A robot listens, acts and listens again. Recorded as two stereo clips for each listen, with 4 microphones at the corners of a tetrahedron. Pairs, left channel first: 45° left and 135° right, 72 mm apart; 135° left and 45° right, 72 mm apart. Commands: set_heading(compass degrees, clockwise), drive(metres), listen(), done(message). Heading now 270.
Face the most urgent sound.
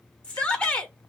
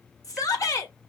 set_heading(150)
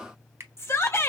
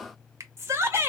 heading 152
done("Found it: a shout, straight ahead.")